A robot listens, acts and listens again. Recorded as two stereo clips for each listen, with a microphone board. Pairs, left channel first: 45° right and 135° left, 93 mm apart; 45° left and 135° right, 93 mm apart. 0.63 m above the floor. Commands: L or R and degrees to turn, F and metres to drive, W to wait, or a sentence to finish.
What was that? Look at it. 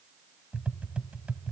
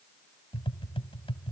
L60
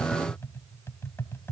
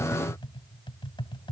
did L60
L15
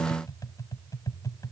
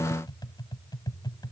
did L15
Found it: tapping, straight ahead, 1 to 2 m away.